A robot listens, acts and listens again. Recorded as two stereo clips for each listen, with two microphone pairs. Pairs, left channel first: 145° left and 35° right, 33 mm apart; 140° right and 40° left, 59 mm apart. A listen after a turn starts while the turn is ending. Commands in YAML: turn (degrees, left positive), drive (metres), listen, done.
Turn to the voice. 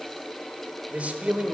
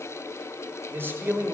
done: "Found it: a man speaking, straight ahead, 1 to 2 m away."